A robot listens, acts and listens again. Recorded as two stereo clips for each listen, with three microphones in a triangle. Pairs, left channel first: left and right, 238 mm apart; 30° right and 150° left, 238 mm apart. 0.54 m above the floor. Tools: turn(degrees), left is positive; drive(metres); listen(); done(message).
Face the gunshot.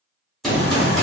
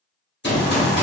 done("Facing the gunshot.")